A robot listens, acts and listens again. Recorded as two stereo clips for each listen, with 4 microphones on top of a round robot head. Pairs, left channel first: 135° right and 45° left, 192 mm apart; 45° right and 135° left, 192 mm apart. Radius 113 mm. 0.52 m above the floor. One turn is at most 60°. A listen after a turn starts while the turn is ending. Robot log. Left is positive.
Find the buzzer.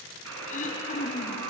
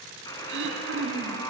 note: The buzzer: 30° left.
cmd yaw +30
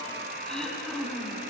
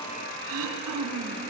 end: Facing the buzzer, 2 to 4 m away.